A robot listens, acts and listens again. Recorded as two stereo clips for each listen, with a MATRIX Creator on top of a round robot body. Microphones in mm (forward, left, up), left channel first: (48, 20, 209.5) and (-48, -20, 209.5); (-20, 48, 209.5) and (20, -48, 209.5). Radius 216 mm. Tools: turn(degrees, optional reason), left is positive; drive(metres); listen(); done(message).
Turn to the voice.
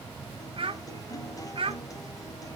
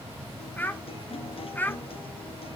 turn(degrees=-175, reason="The child speaking: 175° right.")
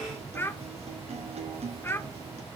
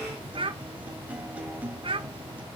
turn(degrees=-45, reason="The child speaking is now 45° right.")
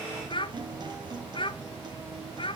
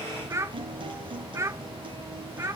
turn(degrees=-10, reason="The child speaking is now 10° right.")
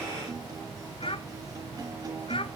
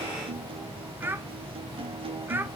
done("Found it: a child speaking, straight ahead, 1 to 2 m away.")